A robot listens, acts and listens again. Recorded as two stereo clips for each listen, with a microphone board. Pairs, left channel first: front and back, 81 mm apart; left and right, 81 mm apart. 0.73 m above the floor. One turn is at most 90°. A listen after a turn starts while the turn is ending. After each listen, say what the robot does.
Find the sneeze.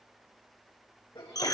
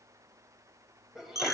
Facing the sneeze, over 4 m away.